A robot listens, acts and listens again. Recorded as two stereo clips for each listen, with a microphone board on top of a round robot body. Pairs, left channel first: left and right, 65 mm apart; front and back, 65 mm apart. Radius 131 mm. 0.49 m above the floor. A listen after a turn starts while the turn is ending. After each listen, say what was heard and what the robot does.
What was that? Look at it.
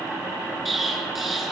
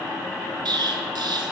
The explosion: straight behind. Turn 180° left.
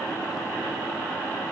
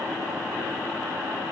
Facing where the explosion came from. I can't hear it now.